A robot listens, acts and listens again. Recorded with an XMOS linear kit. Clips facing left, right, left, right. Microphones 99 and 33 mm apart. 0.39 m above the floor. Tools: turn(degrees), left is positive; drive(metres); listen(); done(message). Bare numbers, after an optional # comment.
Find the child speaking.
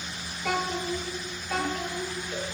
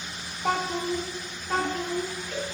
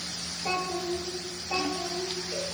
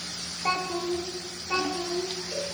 # The child speaking: about 40° right or 140° right.
turn(-40)
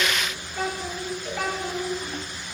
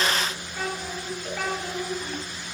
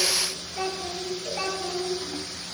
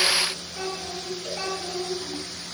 done("Facing the child speaking, 2 to 4 m away.")